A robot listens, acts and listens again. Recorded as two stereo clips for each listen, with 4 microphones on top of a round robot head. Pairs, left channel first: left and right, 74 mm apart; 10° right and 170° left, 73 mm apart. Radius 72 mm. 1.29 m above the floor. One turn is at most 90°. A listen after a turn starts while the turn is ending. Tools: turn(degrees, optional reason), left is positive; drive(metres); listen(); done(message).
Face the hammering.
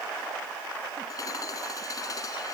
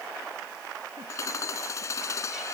turn(degrees=40, reason="The hammering: 40° left.")
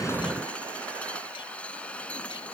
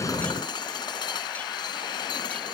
turn(degrees=15, reason="The hammering is now 15° left.")
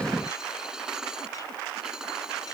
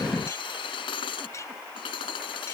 done("Found it: hammering, straight ahead.")